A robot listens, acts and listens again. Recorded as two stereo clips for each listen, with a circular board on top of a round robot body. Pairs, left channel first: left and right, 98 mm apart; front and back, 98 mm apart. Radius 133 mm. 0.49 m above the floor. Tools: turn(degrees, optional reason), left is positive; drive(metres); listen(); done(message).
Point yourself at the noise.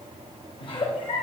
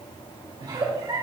turn(degrees=125, reason="The giggle: 125° left.")
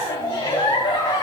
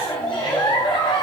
turn(degrees=45, reason="The giggle is now 45° left.")
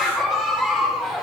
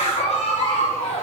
done("Facing the giggle.")